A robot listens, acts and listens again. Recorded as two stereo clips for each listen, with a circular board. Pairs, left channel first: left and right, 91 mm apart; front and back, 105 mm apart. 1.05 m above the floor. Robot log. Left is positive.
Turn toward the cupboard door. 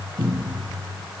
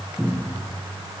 note: The cupboard door: 90° right.
cmd yaw -90
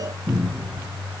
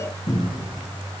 end: Found it: a cupboard door, straight ahead, 1 to 2 m away.